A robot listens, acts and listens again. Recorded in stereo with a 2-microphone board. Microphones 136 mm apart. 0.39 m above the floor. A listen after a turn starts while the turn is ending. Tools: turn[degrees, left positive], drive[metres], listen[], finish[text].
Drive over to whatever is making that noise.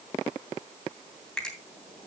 Action: turn[30]
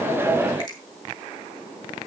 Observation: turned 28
Action: listen[]
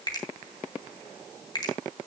Thought: So it is at 145° left.
Action: turn[145]
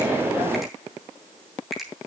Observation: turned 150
Action: drive[1.0]
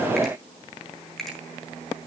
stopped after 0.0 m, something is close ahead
Action: finish[Something is in my way. I am facing the finger snap but have not reached it.]